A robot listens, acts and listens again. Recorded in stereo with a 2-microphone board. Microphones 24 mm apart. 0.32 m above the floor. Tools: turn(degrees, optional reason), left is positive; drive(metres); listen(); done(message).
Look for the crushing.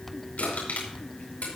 turn(degrees=70, reason="The crushing: about 70° left or 110° left.")
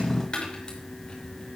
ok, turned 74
turn(degrees=30, reason="So it is at 30° left.")
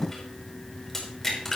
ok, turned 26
done("Facing the crushing.")